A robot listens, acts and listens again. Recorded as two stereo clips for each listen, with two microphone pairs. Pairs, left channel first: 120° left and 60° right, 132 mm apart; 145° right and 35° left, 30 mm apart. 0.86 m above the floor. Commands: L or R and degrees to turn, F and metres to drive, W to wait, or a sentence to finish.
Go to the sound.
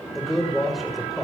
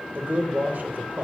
L30
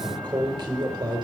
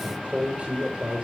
F1.0
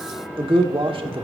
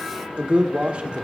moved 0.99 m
R10
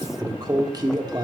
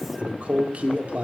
F1.0
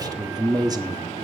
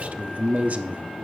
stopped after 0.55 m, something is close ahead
I am next to the man speaking.